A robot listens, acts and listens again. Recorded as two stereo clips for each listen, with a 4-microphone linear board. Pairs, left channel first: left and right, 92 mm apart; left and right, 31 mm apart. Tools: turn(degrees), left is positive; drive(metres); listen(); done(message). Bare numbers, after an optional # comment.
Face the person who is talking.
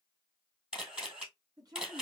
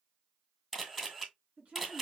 # The woman speaking: about 45° right or 135° right.
turn(-45)
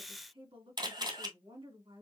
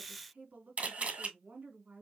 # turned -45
# So it is at 90° right.
turn(-90)
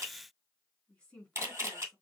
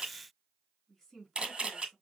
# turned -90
# The woman speaking is now 10° left.
turn(10)
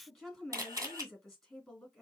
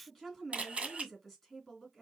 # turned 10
done("Facing the woman speaking, 2 to 4 m away.")